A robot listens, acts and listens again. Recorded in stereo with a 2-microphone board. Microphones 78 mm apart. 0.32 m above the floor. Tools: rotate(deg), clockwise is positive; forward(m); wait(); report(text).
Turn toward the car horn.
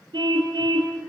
rotate(70)
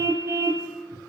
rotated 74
rotate(35)
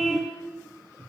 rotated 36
report("Facing the car horn.")